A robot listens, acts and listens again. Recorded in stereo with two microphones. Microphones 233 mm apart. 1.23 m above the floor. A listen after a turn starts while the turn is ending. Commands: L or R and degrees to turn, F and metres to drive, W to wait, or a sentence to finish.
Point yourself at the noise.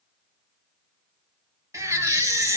R30
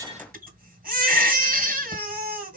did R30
R135
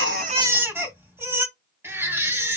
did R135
R10
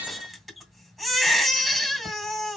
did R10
Facing the baby crying.